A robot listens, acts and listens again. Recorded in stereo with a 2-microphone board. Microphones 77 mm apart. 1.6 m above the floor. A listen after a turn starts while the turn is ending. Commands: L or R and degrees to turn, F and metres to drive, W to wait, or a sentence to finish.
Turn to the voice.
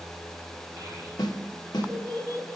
R40
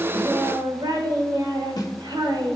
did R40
R105
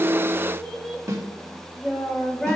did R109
Found it: a child speaking, straight ahead.